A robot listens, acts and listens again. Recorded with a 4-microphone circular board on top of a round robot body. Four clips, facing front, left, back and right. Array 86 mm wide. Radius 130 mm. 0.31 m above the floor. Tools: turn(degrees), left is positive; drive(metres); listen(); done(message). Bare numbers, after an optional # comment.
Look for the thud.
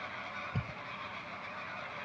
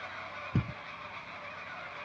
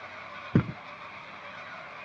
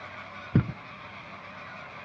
# The thud: 155° right.
turn(-155)
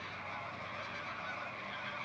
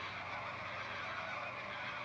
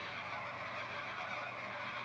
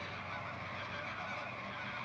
done("Facing where the thud came from. I can't hear it now.")